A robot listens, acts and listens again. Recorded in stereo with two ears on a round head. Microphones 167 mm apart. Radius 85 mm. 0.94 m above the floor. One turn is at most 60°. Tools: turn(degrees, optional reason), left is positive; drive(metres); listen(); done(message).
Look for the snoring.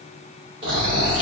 turn(degrees=-30, reason="The snoring: about 30° right or 150° right.")
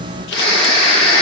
done("Found it: snoring, straight ahead.")